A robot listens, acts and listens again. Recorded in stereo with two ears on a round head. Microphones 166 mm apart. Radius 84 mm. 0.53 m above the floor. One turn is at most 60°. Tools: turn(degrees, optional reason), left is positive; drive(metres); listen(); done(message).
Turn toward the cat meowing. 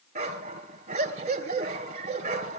listen()
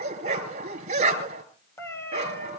turn(degrees=30)
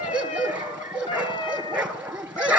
turn(degrees=25, reason="The cat meowing: about 25° left or 155° left.")
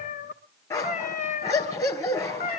turn(degrees=60, reason="So it is at 135° left.")
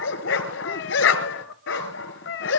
turn(degrees=60, reason="The cat meowing is now 70° left.")
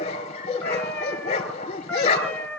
turn(degrees=10, reason="The cat meowing is now 10° left.")
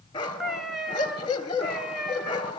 done("Found it: a cat meowing, straight ahead.")